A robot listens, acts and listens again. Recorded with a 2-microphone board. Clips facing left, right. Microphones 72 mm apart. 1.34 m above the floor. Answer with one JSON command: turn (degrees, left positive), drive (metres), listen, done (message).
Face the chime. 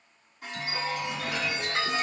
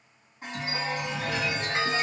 {"turn": -30}
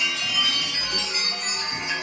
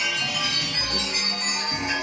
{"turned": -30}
{"turn": -115}
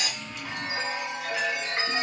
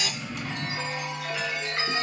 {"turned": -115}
{"turn": 25}
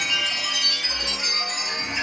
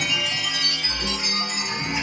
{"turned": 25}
{"done": "Facing the chime."}